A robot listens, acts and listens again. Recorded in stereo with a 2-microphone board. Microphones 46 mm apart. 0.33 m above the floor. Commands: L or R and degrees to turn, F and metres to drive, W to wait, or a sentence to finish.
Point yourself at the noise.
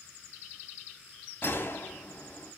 L50
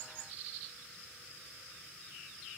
W
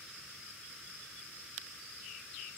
I heard a gunshot, but can't make it out now. It was about straight ahead or 80° left.